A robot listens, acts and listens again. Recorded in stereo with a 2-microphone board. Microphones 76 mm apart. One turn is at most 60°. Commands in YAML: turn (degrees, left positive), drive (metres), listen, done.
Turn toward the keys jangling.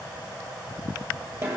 listen: true
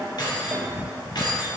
turn: 60
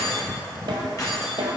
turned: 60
turn: 50
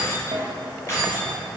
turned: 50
turn: 40
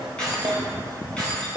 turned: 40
turn: 15
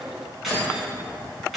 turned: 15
done: "Found it: keys jangling, straight ahead, 2 to 4 m away."